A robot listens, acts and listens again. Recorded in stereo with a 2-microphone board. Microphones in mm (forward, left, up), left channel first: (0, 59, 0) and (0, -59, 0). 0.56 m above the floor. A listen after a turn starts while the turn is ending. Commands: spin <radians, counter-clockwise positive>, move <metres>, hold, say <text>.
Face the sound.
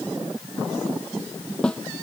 spin 0.52
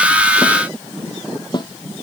spin 2.44
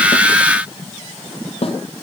spin 0.96
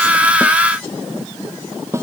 spin -0.44
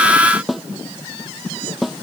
say Found it: a snare drum, straight ahead.